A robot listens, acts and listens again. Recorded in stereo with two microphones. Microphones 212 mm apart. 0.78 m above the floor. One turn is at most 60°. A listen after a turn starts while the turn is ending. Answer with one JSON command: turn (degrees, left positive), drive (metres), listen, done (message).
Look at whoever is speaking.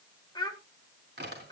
{"turn": 20}
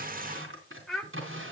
{"done": "Facing the child speaking, 1 to 2 m away."}